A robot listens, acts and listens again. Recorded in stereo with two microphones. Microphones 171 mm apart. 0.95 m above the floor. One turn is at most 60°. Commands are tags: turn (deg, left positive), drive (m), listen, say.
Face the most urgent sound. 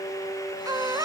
<turn deg="-20"/>
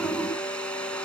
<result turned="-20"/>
<listen/>
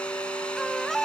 <say>Found it: a baby crying, straight ahead.</say>